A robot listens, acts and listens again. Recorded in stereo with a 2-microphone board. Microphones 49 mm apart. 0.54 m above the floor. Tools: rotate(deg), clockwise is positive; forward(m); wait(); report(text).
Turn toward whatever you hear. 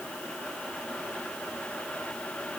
wait()
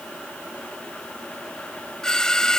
rotate(-30)
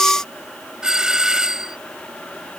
rotate(15)
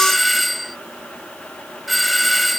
report("Facing the doorbell.")